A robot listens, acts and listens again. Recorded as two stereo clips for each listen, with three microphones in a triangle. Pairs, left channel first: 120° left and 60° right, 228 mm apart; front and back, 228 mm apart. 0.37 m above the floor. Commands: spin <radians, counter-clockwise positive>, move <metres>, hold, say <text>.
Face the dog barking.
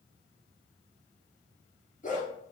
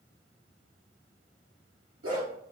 spin 3.05
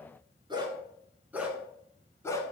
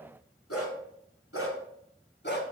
spin 0.79
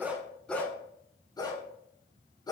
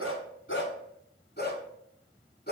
spin 0.87
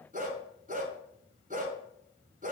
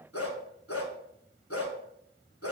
say Found it: a dog barking, straight ahead, 1 to 2 m away.